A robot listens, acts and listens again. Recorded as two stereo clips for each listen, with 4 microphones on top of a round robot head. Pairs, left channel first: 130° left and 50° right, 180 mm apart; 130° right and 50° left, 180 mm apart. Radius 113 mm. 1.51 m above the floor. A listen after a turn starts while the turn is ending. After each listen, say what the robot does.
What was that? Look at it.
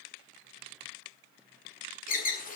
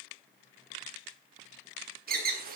Turn 90° left.
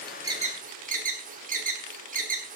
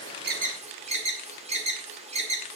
Facing the alarm, 2 to 4 m away.